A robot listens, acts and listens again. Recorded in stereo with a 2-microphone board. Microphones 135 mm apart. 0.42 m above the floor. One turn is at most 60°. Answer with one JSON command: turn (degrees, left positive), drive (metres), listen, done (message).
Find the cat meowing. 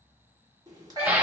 {"turn": -30}
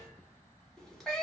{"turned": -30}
{"done": "Facing the cat meowing, 1 to 2 m away."}